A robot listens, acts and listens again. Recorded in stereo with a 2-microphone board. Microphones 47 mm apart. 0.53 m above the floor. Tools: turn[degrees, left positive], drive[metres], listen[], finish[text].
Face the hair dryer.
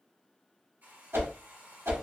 Thought: The hair dryer: about 40° right or 140° right.
Action: turn[-40]
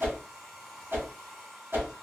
Action: finish[Found it: a hair dryer, straight ahead, 1 to 2 m away.]